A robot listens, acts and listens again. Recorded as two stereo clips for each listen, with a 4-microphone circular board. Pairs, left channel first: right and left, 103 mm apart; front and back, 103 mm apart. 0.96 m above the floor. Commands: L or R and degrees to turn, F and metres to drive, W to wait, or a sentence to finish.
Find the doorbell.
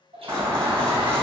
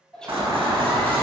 L135
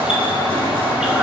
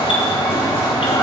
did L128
L10
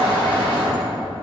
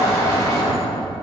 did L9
Facing the doorbell.